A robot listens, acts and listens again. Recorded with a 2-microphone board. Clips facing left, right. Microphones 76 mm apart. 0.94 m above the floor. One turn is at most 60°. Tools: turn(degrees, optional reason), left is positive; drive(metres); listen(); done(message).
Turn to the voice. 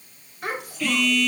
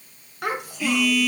turn(degrees=-60)
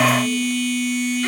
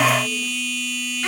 turn(degrees=-30, reason="Nothing new. It was at 30° right.")
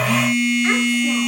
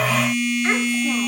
listen()
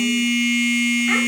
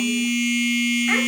done("Facing where the child speaking came from. I can't hear it now.")